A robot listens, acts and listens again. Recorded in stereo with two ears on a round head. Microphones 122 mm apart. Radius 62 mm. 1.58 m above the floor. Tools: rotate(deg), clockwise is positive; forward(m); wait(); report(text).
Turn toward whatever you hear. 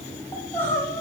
rotate(-15)
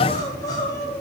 rotate(-150)
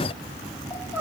rotate(-15)
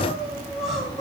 report("Facing the crying.")